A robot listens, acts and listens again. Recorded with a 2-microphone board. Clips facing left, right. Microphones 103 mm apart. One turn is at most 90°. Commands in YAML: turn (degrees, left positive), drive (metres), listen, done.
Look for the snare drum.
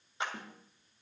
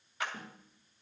turn: 70
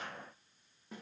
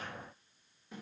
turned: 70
turn: 40
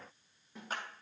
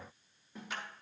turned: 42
done: "Facing the snare drum."